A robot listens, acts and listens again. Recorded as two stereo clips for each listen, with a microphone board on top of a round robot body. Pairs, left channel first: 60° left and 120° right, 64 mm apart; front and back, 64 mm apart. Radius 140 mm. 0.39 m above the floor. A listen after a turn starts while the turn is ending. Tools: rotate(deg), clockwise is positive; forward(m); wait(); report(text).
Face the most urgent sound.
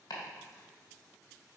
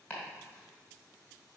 wait()
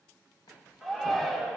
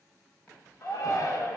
rotate(25)
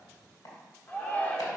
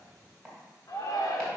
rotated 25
report("Facing the shout, 1 to 2 m away.")